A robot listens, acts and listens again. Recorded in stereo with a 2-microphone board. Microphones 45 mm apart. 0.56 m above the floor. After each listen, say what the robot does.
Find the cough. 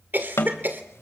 Turn 45° right.
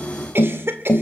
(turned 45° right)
Turn 80° right.
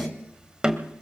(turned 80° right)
Keep listening.
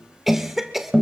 Found it: a cough, straight ahead.